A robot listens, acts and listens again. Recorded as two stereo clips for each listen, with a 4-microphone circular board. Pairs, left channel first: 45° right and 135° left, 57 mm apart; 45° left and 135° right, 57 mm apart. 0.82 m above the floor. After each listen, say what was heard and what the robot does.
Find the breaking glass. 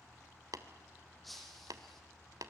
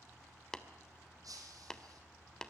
The breaking glass: 130° right. Turn 130° right.
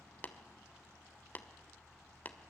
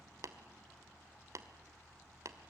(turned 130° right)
I heard breaking glass from this way, but can't make it out now.